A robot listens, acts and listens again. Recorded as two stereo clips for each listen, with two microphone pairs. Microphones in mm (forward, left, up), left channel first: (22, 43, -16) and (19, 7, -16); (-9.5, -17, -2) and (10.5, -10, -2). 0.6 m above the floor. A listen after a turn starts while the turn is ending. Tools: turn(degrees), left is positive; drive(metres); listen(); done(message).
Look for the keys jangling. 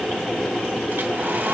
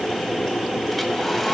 listen()
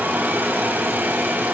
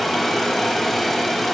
listen()
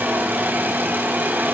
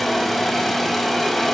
done("I can't make out keys jangling to turn to.")